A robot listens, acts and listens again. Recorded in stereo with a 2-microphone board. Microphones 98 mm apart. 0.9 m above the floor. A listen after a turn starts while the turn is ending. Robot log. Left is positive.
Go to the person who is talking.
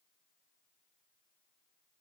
cmd idle
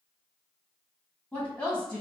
cmd yaw +30
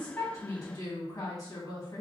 note: So it is at 140° left.
cmd yaw +140
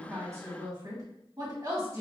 note: The woman speaking is now 40° right.
cmd yaw -40
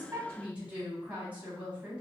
note: The woman speaking is now 15° right.
cmd yaw -15
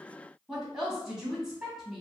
cmd fwd 1.0
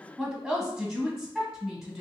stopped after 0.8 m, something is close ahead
end: Arrived at the woman speaking, straight ahead.